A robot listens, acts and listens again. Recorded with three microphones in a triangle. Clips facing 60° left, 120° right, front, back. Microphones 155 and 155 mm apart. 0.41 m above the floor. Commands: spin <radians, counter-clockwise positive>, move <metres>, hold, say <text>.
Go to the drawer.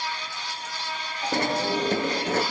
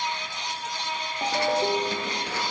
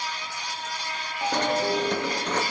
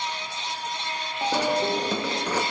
spin 1.66
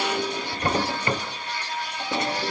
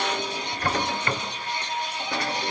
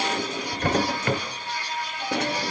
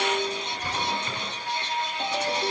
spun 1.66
move 1.0
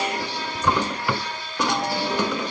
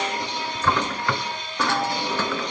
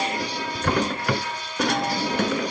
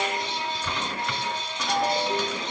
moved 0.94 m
spin -0.26
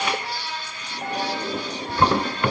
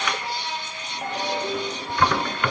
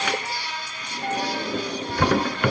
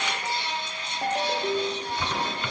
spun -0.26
move 1.0
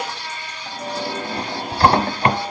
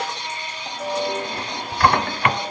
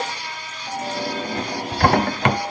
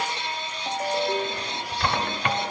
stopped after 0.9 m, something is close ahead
say Arrived at the drawer, straight ahead.